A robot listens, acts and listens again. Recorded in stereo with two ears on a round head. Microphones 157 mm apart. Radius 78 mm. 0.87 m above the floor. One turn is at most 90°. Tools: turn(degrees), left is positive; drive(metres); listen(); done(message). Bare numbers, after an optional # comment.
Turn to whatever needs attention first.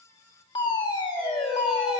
# The fire alarm: about 25° left or 155° left.
turn(25)
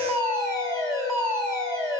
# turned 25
done("Facing the fire alarm.")